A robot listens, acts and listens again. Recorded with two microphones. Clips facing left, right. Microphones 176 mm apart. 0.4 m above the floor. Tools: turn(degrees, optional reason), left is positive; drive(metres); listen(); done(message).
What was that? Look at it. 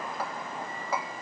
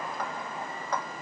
turn(degrees=30)
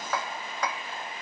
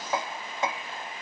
turn(degrees=-20, reason="So it is at 20° right.")
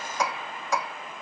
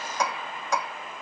done("Found it: hammering, straight ahead.")